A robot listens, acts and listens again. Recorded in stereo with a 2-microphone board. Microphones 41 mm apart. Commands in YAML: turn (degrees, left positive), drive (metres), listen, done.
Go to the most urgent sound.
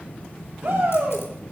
turn: -90
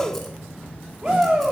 turn: -10
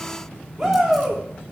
drive: 1.0
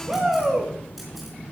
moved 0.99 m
drive: 1.0
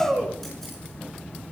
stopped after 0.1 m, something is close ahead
done: "Blocked. The shout is further on, straight ahead."